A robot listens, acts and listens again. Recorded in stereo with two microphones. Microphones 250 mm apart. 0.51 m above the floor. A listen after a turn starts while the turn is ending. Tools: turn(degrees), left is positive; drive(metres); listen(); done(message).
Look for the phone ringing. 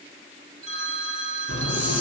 turn(degrees=25)
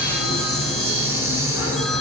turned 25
listen()
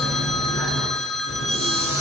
done("Found it: a phone ringing, straight ahead.")